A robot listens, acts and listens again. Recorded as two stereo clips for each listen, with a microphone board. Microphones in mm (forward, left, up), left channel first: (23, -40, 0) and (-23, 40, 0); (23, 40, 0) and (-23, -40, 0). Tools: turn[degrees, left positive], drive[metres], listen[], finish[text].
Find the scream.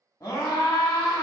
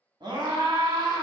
Thought: The scream: 110° right.
Action: turn[-110]
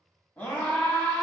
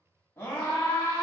Action: finish[Found it: a scream, straight ahead, 1 to 2 m away.]